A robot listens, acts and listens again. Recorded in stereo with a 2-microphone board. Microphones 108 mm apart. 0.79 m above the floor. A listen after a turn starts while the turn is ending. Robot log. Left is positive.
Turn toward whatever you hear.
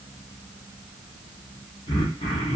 note: The throat clearing: about 65° left or 115° left.
cmd yaw +65
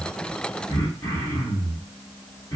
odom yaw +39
note: So it is at 35° left.
cmd yaw +35
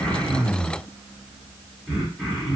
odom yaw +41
end: Facing the throat clearing, 1 to 2 m away.